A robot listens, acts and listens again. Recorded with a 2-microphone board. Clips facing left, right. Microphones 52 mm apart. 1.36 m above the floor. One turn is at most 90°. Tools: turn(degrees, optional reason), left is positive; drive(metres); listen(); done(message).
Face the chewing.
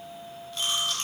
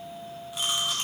turn(degrees=-30)
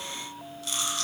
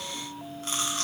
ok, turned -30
turn(degrees=-90, reason="So it is at 135° right.")
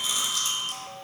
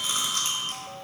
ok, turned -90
turn(degrees=-50, reason="The chewing is now 50° right.")
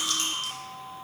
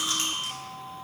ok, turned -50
turn(degrees=-30, reason="The chewing is now 30° right.")
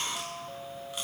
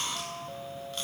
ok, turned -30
listen()
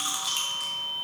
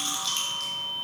turn(degrees=15, reason="The chewing is now 15° left.")
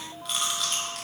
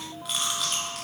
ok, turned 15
done("Found it: chewing, straight ahead, 1 to 2 m away.")